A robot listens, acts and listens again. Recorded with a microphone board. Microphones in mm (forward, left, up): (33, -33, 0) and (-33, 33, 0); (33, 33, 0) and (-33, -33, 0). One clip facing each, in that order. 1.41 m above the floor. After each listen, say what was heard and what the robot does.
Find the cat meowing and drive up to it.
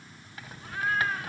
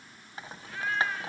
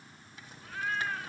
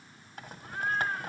The cat meowing: 75° right. Turn 75° right.
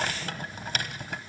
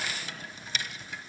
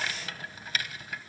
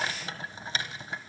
Keep listening.
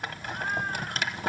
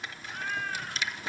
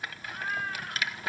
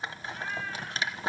The cat meowing is now 15° left. Turn 15° left.
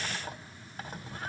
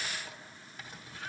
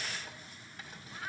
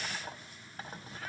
Keep listening.
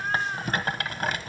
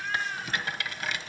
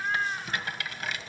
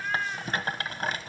Drive 1.0 m forward.
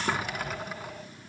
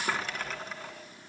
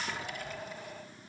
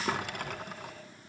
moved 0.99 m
Drive 1.0 m forward.
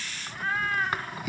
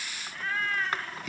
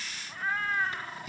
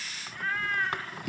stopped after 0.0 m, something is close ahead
I am next to the cat meowing.